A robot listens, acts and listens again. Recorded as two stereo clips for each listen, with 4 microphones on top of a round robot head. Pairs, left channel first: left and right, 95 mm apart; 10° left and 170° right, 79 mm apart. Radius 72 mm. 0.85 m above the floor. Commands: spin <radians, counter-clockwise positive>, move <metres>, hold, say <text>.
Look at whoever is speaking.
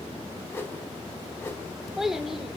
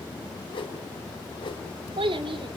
spin -3.05
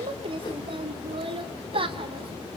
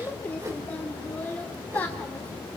spin -1.13
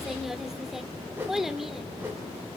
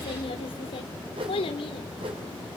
say Facing the child speaking.